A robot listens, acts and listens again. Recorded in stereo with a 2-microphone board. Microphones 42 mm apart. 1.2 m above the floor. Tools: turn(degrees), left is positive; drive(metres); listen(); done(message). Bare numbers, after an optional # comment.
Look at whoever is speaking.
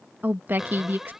# The woman speaking: about 60° right or 120° right.
turn(-60)
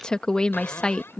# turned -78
# So it is at 20° left.
turn(20)
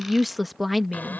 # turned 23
done("Found it: a woman speaking, straight ahead.")